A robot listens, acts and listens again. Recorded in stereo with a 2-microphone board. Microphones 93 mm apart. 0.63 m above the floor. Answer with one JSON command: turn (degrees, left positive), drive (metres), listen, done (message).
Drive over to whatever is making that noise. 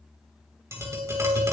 {"turn": -30}
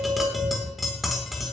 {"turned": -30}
{"drive": 1.0}
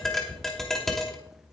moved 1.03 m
{"drive": 1.0}
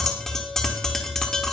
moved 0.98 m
{"drive": 1.0}
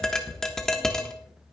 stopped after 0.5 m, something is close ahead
{"done": "I am next to the tapping."}